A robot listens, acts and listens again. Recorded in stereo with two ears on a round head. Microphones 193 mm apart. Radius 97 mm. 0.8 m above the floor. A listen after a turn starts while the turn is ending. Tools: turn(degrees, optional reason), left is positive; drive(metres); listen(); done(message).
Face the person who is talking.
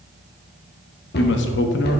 turn(degrees=55, reason="The man speaking: about 55° left or 125° left.")
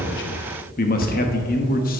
turn(degrees=50, reason="So it is at 50° left.")
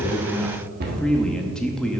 done("Found it: a man speaking, straight ahead.")